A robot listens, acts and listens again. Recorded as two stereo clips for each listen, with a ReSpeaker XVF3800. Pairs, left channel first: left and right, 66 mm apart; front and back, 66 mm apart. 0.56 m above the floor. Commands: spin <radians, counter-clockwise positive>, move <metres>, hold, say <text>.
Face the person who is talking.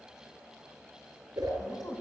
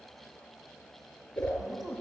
spin 1.66
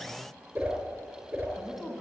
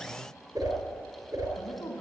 say Found it: a woman speaking, straight ahead.